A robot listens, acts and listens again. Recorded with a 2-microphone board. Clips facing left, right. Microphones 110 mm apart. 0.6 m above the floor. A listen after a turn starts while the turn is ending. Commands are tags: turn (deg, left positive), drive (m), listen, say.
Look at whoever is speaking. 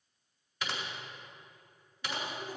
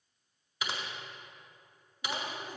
<turn deg="-20"/>
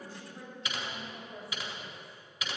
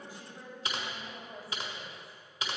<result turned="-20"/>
<say>Found it: a woman speaking, straight ahead.</say>